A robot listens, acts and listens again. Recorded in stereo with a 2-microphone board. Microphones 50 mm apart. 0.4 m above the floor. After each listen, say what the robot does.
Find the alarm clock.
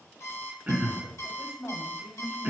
Turn 65° left.
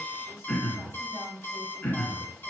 Turn 45° left.
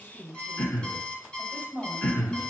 Turn 25° left.
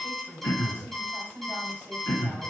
Facing the alarm clock, 1 to 2 m away.